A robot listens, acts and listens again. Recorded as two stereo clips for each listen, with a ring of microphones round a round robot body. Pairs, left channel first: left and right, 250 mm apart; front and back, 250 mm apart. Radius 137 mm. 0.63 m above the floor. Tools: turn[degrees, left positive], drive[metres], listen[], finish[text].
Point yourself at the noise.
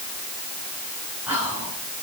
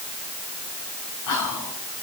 Action: finish[Found it: whispering, straight ahead.]